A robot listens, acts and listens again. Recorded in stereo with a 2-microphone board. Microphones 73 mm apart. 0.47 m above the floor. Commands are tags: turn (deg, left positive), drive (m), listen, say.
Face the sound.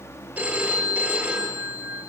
<turn deg="-20"/>
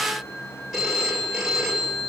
<say>Facing the phone ringing.</say>